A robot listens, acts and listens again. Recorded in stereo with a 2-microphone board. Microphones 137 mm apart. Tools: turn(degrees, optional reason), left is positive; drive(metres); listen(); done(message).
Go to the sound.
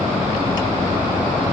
listen()
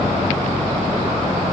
listen()
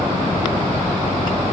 done("I can't make out anything to turn to.")